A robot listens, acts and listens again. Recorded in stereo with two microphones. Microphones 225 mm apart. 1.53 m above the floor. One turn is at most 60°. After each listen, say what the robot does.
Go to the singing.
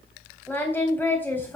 Turn 30° left.
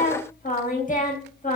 Turn 60° left.
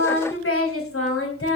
Turn 60° left.
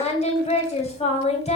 Turn 30° left.
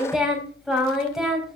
Drive 1.0 m forward.
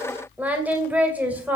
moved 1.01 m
Drive 1.0 m forward.
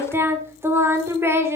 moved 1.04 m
Turn 15° right.
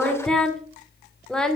Drive 1.0 m forward.
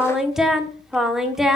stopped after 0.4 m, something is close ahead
Arrived at the singing, straight ahead.